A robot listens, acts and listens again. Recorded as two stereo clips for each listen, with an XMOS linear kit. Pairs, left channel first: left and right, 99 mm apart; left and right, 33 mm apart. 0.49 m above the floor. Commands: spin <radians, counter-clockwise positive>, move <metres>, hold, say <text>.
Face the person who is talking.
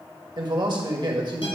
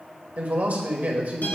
spin -0.96
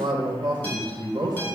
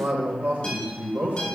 spin -1.13
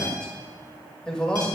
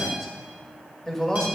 spin 0.17
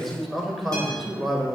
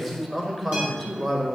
say Facing the man speaking.